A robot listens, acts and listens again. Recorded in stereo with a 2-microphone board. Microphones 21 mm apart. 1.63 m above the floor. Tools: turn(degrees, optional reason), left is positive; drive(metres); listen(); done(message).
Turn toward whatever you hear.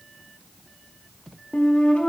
turn(degrees=75, reason="The flute: about 75° left or 105° left.")
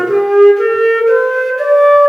done("Facing the flute.")